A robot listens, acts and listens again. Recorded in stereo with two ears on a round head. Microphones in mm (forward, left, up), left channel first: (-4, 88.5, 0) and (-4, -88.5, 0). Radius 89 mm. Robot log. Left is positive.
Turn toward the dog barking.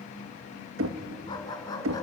note: The dog barking: about 20° left or 160° left.
cmd yaw +20
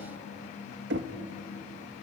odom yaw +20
cmd idle
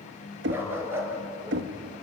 note: So it is at 15° right.
cmd yaw -15
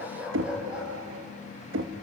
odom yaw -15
end: Facing the dog barking.